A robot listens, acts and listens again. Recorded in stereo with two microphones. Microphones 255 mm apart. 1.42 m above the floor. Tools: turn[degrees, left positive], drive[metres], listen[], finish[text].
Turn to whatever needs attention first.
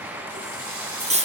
Action: listen[]
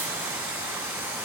Action: listen[]
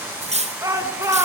Action: turn[-30]
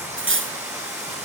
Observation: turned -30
Action: listen[]
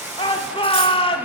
Thought: So it is at 20° left.
Action: turn[20]
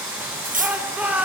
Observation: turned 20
Action: finish[Found it: a shout, straight ahead.]